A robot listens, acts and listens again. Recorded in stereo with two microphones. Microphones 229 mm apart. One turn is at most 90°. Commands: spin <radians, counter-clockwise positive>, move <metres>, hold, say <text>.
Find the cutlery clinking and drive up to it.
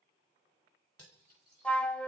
spin 1.57
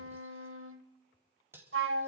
spin -0.17
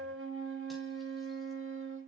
hold
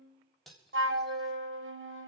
move 1.0
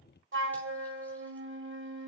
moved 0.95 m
hold
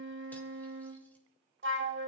hold
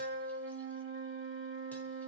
say I heard cutlery clinking from this way, but can't make it out now. I did not reach it.